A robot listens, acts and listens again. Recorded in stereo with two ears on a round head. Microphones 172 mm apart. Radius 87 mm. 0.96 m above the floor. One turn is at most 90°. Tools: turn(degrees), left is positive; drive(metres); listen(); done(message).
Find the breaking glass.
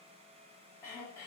listen()
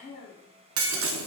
turn(degrees=-90)
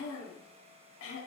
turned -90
done("Facing where the breaking glass came from. I can't hear it now.")